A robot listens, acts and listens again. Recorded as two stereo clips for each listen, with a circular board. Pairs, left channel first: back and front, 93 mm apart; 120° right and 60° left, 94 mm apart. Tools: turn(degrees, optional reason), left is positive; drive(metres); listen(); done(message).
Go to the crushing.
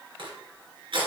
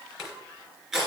turn(degrees=-25, reason="The crushing: 25° right.")
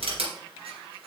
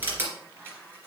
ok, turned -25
turn(degrees=-10, reason="The crushing is now 10° right.")
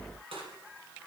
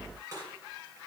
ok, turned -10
drive(metres=1.0)
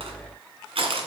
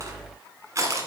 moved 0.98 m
drive(metres=1.0)
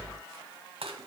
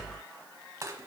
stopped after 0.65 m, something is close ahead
done("I am next to the crushing.")